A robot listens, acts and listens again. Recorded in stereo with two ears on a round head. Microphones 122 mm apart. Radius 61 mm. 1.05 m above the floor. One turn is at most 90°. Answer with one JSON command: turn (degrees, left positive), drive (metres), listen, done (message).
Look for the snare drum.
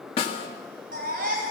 {"turn": 45}
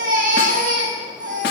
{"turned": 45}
{"listen": true}
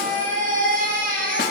{"listen": true}
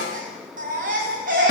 {"done": "I heard a snare drum, but can't make it out now. It was about straight ahead or 90° left."}